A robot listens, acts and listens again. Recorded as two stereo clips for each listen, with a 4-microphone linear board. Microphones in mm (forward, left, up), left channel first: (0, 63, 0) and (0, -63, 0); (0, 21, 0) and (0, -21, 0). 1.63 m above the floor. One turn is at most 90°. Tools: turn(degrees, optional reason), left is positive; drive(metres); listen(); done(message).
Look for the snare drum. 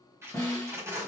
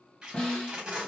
turn(degrees=25, reason="The snare drum: about 25° left or 155° left.")
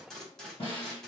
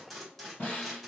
turn(degrees=90, reason="So it is at 125° left.")
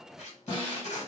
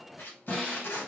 turn(degrees=40, reason="The snare drum is now 40° left.")
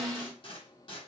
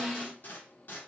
done("Facing the snare drum.")